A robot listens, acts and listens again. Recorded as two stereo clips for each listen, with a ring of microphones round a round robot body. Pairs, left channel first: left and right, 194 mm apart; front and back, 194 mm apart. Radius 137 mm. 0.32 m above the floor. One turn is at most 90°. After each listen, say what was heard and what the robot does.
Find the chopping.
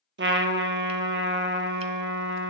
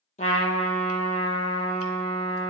Keep listening.
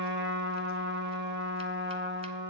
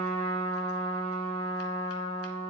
Keep listening.
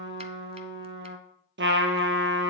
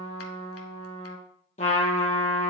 I can't make out chopping to turn to.